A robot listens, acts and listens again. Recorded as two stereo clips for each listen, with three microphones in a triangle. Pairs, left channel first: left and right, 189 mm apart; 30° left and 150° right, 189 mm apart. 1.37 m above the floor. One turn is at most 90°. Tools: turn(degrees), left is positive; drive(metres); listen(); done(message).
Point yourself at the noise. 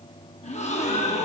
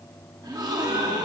turn(degrees=90)
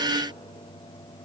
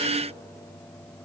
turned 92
turn(degrees=50)
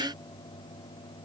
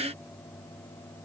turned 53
done("Facing where the gasp came from. I can't hear it now.")